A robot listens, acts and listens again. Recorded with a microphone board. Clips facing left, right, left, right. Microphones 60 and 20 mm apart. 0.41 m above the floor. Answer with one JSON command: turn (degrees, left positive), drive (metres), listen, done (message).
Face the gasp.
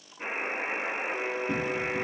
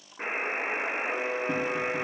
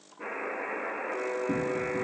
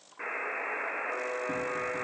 {"listen": true}
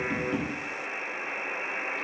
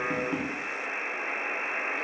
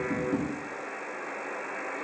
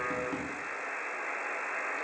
{"listen": true}
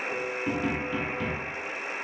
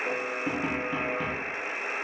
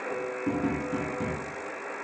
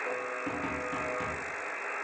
{"done": "I can't make out a gasp to turn to."}